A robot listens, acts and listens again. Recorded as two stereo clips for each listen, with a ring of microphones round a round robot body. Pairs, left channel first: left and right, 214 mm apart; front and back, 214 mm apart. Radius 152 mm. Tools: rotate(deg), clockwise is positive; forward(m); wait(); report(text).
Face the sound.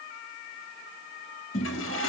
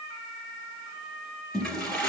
rotate(-85)
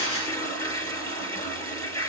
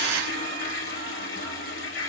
rotate(-15)
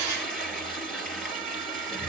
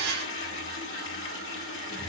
report("Facing the toilet flushing, 2 to 4 m away.")